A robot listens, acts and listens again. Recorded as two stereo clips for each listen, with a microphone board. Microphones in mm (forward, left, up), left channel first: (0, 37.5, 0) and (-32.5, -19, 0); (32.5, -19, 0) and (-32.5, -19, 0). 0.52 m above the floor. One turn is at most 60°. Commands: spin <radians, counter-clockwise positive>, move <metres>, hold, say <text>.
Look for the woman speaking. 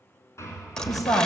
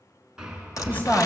spin 1.05
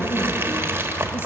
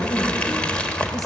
hold
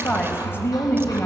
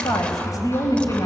spin 0.17
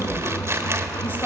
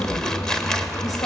hold
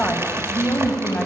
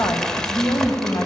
say Facing the woman speaking, 2 to 4 m away.